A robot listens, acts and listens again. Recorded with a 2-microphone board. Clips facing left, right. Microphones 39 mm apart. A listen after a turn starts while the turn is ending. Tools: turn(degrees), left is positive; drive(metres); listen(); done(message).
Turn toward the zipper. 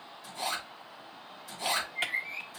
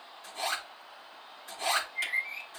turn(degrees=-45)
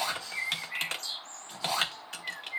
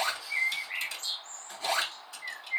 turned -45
turn(degrees=-90)
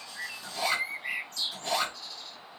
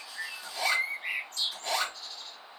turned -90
done("Facing the zipper.")